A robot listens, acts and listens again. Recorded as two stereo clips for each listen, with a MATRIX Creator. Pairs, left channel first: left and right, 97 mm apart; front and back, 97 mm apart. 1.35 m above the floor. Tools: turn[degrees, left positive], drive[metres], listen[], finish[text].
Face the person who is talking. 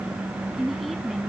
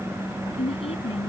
Action: finish[Found it: a woman speaking, straight ahead.]